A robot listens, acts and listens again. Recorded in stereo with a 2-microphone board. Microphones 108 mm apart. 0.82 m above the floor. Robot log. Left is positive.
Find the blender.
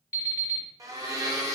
note: The blender: about 35° right or 145° right.
cmd yaw -35
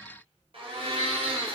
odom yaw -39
note: So it is at 100° right.
cmd yaw -100
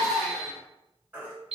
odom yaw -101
cmd idle
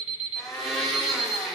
end: Facing the blender.